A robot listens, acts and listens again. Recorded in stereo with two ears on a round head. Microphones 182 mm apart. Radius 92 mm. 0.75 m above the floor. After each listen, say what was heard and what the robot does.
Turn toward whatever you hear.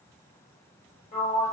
The sliding door: about 30° left or 150° left. Turn 30° left.
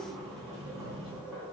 Facing the sliding door.